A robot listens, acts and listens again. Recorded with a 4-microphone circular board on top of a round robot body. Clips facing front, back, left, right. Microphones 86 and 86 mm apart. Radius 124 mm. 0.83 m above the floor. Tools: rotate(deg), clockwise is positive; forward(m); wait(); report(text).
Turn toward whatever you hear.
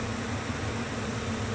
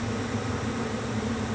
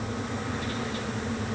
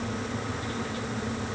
wait()
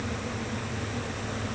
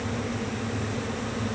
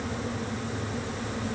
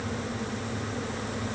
wait()
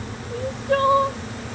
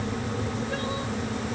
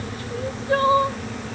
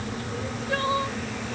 rotate(-35)
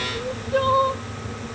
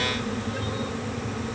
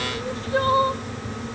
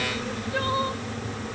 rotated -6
rotate(-30)
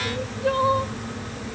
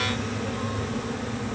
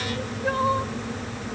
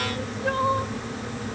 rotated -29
wait()
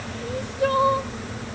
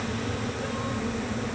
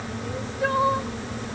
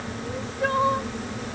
report("Found it: crying, straight ahead.")